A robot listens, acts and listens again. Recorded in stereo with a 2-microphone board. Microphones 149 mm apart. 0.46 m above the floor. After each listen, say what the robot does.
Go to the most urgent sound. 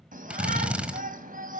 Turn 70° right.
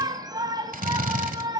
Turn 30° right.
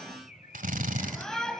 Drive 1.0 m forward.
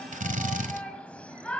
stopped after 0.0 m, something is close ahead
Turn 10° left.
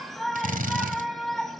Blocked. The shout is further on, straight ahead.